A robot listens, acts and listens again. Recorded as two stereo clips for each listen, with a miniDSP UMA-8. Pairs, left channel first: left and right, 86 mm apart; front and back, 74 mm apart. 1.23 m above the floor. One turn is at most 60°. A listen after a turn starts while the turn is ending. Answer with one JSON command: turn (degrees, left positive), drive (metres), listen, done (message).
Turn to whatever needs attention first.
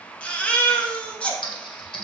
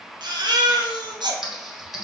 {"turn": 60}
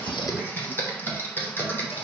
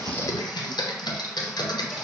{"turn": 60}
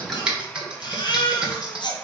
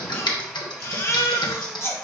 {"turn": 55}
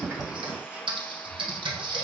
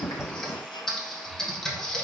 {"listen": true}
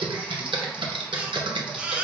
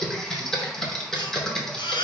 {"turn": -15}
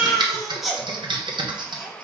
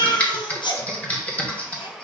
{"done": "Facing the baby crying, under 1 m away."}